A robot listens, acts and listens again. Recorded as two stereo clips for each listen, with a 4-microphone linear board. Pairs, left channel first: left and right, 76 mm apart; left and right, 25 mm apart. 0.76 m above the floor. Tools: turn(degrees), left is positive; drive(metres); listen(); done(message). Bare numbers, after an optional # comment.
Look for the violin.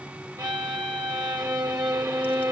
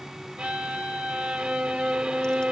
# The violin: about 55° right or 125° right.
turn(-55)
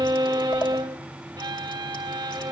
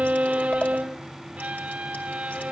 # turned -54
# So it is at 70° right.
turn(-70)
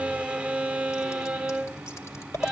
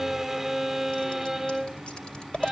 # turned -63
done("Facing the violin.")